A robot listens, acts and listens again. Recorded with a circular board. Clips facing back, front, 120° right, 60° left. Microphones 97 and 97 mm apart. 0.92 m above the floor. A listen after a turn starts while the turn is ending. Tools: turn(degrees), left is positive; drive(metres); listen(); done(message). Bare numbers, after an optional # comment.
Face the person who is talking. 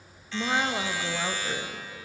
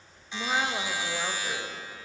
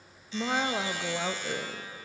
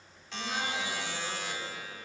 # The woman speaking: 100° right.
turn(-100)
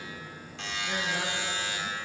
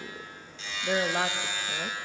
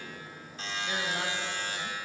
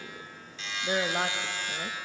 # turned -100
# The woman speaking is now 20° left.
turn(20)
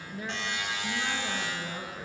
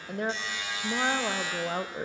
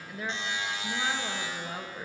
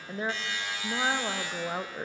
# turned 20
done("Found it: a woman speaking, straight ahead.")